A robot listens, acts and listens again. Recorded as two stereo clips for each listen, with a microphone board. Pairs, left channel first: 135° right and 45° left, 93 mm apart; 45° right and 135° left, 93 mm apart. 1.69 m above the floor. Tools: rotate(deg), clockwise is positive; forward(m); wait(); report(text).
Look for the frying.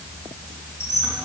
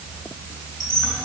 wait()
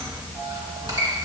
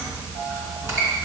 wait()
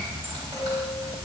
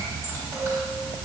report("I can't make out frying to turn to.")